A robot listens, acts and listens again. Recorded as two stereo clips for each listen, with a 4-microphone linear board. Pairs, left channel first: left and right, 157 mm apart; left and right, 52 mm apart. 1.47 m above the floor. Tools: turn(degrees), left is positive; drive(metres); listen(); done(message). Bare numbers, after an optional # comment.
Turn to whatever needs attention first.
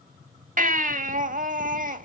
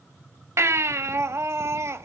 # The baby crying: about 60° right or 120° right.
turn(-60)
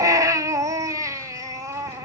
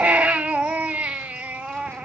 # So it is at 25° right.
turn(-25)
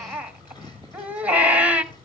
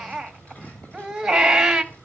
# The baby crying is now 10° right.
turn(-10)
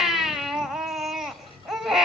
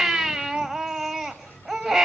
done("Found it: a baby crying, straight ahead, 1 to 2 m away.")